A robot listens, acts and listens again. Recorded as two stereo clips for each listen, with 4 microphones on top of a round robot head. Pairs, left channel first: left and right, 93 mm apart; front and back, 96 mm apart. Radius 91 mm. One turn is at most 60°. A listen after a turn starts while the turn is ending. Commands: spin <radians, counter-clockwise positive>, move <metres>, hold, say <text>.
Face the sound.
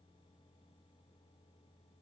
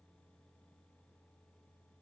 hold
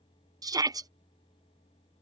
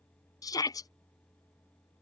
spin -0.87
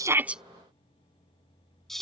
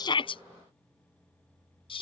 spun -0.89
say Found it: a shout, straight ahead.